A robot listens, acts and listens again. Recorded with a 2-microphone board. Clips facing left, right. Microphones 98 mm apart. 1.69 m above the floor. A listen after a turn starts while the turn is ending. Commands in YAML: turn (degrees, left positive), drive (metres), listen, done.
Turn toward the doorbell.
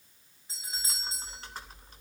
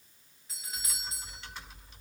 turn: 30
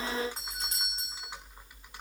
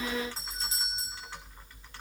turn: 125
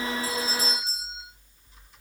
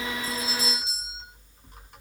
turn: 45
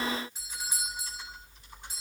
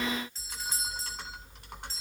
turn: 15
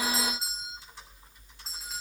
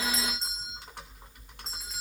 done: "Found it: a doorbell, straight ahead."